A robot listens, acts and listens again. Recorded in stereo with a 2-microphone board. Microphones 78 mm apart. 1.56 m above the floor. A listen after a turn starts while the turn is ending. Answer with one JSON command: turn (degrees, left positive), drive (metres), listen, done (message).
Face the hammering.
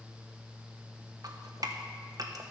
{"listen": true}
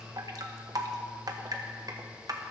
{"listen": true}
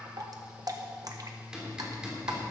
{"turn": -30}
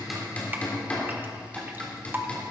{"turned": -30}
{"turn": 20}
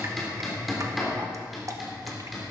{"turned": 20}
{"done": "Facing the hammering."}